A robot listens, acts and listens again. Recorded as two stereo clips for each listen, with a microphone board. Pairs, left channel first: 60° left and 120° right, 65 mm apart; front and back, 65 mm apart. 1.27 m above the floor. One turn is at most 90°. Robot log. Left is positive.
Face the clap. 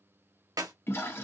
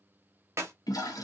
note: The clap: 135° right.
cmd yaw -90
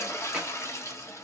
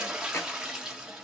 note: Nothing new. It was at 45° right.
cmd yaw -45
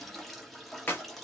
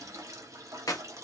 end: Facing the clap.